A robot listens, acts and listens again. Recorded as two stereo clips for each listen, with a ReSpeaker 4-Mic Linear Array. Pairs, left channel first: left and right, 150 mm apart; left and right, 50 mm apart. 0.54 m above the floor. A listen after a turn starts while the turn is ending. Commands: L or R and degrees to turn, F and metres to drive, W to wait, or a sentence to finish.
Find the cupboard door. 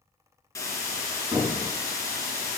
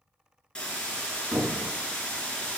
R25
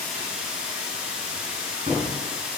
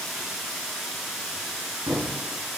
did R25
R125
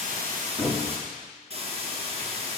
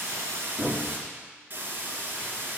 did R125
Found it: a cupboard door, straight ahead.